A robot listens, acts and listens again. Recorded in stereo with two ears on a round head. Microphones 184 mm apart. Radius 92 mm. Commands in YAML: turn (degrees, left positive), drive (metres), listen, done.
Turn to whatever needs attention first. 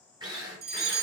turn: -50
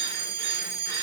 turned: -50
turn: -60
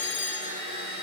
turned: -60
turn: 15
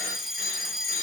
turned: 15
done: "Facing the fire alarm."